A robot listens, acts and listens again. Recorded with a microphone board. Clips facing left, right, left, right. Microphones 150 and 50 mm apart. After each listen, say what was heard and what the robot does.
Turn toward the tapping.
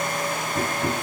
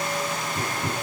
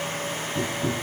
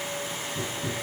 The tapping: about 20° left or 160° left. Turn 20° left.
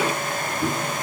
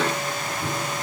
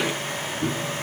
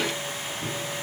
So it is at 140° left. Turn 140° left.
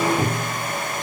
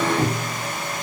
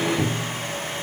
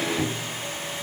The tapping is now 15° left. Turn 15° left.
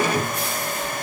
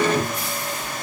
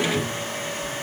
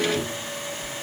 Found it: tapping, straight ahead.